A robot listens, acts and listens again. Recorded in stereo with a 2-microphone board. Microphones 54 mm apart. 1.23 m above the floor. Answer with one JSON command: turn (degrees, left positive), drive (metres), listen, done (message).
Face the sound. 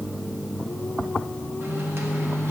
{"turn": -45}
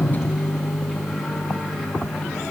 {"done": "Found it: a microwave, straight ahead, 1 to 2 m away."}